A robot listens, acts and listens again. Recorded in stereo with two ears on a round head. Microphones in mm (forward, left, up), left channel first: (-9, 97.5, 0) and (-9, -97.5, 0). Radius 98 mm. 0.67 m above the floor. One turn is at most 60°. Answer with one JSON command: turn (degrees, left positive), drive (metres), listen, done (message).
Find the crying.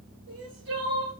{"turn": -55}
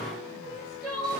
{"done": "Facing the crying, 2 to 4 m away."}